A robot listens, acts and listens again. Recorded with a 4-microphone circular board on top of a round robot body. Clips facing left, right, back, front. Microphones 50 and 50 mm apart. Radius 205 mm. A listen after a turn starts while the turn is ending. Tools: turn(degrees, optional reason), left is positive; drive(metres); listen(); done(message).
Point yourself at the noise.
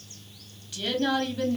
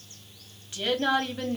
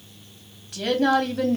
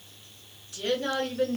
turn(degrees=-150, reason="The woman speaking: 150° right.")
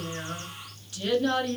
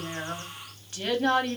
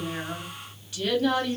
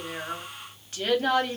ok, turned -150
turn(degrees=-45, reason="The woman speaking is now 45° right.")
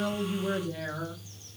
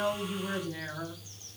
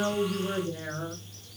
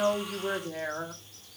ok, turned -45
done("Facing the woman speaking, 1 to 2 m away.")